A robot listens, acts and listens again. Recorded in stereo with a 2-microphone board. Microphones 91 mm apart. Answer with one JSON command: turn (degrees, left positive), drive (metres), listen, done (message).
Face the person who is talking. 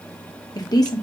{"turn": 45}
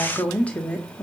{"turn": 15}
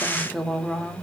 {"done": "Facing the woman speaking, under 1 m away."}